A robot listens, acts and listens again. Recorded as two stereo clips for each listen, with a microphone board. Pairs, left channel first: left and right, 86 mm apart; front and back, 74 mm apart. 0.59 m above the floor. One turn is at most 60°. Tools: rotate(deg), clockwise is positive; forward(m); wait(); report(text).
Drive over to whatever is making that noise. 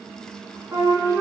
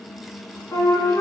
rotate(35)
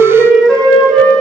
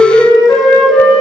forward(1.0)
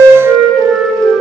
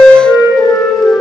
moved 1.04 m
forward(1.0)
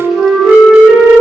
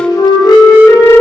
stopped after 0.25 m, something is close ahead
report("I am next to the flute.")